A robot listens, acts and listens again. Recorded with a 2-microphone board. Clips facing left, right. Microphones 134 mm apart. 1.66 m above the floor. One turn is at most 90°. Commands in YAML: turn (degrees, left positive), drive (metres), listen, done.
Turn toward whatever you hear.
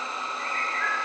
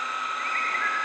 turn: -60
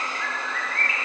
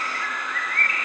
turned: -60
turn: -60
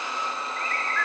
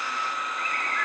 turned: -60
turn: -20
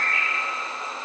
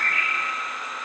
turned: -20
done: "Facing the bird, over 4 m away."